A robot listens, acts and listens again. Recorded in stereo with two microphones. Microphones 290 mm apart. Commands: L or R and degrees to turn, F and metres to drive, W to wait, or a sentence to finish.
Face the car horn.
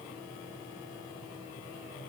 W
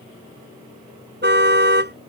R40
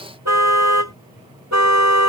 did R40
R105
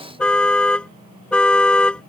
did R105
Found it: a car horn, straight ahead.